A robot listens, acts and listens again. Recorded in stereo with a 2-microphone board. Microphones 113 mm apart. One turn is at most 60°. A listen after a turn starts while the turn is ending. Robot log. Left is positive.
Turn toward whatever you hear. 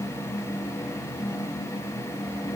cmd idle
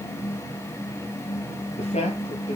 cmd yaw +60
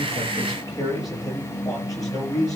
note: So it is at 30° left.
cmd yaw +30
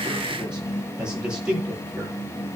note: The man speaking is now 10° right.
cmd yaw -10
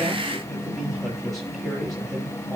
end: Found it: a man speaking, straight ahead, over 4 m away.